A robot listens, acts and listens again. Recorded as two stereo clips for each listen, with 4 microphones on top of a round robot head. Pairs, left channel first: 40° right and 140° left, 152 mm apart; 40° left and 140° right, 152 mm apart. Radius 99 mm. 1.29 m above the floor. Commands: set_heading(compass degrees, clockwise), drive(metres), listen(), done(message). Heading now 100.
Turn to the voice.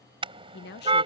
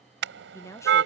set_heading(135)
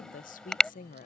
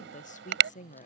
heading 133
done("Facing the woman speaking.")